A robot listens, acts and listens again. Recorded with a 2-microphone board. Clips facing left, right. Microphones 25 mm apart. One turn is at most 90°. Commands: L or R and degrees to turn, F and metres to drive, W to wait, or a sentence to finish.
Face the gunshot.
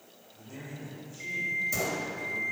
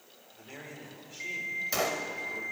R45
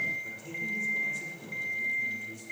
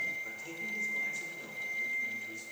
W
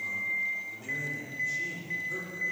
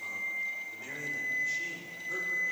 I heard a gunshot, but can't make it out now. It was about straight ahead or 90° right.